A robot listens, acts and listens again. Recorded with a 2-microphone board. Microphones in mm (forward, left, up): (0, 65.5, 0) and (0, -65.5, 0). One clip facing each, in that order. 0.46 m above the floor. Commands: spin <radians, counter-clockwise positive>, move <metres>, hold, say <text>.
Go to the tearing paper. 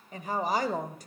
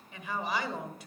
hold
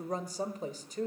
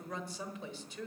hold
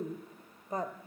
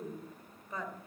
say I can't make out tearing paper, only a woman speaking.